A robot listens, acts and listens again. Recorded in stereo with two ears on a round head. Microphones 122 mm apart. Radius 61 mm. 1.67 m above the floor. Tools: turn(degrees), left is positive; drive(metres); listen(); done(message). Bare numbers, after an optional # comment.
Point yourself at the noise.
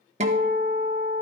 # The guitar: about 55° right or 125° right.
turn(-55)
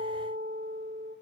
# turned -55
# So it is at 65° right.
turn(-65)
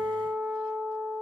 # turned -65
# The guitar is now 10° right.
turn(-10)
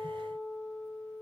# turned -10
done("Facing the guitar.")